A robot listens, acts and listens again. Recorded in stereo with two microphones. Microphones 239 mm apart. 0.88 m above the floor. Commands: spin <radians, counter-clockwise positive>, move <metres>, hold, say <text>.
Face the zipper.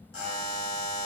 hold
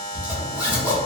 spin -0.52
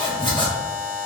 spin 0.35
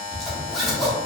say Facing the zipper, under 1 m away.